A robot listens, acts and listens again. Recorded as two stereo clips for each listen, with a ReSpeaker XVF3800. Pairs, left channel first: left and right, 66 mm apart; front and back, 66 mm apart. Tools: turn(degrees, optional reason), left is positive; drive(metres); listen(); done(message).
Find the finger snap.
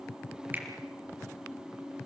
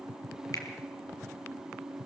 listen()
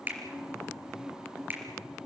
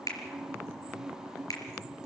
turn(degrees=-30, reason="The finger snap: 30° right.")
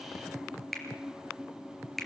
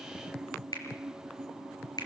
done("Facing the finger snap, over 4 m away.")